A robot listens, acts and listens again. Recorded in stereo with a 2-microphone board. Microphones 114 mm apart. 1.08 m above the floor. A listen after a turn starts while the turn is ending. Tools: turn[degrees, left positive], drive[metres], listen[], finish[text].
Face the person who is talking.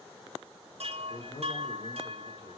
Thought: The man speaking: about 70° left or 110° left.
Action: turn[70]
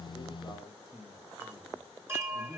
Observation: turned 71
Action: finish[Facing the man speaking.]